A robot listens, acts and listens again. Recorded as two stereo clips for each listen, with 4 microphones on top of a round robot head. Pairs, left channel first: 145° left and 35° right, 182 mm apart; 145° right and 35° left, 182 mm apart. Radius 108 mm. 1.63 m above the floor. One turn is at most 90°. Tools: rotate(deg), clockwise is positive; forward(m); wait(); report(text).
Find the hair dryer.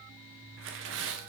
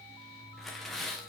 wait()
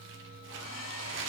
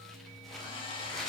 rotate(-90)
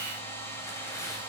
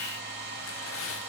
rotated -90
rotate(-70)
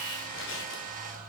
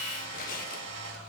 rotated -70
rotate(-15)
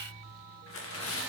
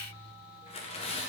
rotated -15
wait()
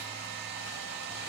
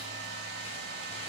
report("Facing the hair dryer.")